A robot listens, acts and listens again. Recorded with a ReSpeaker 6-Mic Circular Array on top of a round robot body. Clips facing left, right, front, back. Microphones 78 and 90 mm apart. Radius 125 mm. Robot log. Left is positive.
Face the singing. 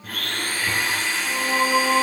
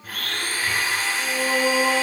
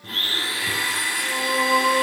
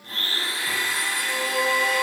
note: The singing: 90° right.
cmd yaw -90
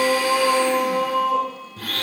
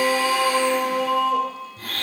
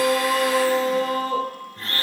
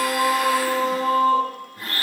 note: The singing is now 10° left.
cmd yaw +10
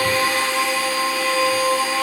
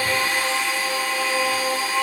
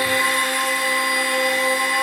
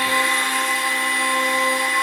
end: Found it: singing, straight ahead, 2 to 4 m away.